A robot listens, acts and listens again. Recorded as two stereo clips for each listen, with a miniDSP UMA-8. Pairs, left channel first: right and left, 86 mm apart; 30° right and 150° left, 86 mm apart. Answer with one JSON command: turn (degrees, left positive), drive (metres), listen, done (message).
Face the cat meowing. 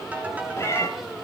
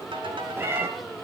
{"turn": -145}
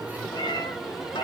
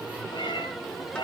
{"turn": -55}
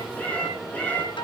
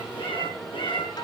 {"turn": -15}
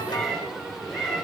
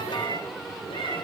{"done": "Found it: a cat meowing, straight ahead."}